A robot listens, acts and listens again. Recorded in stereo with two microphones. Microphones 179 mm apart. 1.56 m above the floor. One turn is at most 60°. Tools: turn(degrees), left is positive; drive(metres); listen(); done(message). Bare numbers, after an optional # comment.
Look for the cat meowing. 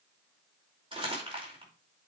listen()
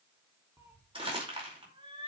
# The cat meowing: about 35° right or 145° right.
turn(-35)
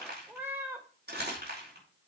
# So it is at 15° right.
turn(-15)
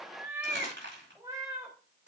# The cat meowing is now 15° right.
turn(-15)
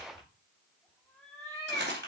done("Found it: a cat meowing, straight ahead, 2 to 4 m away.")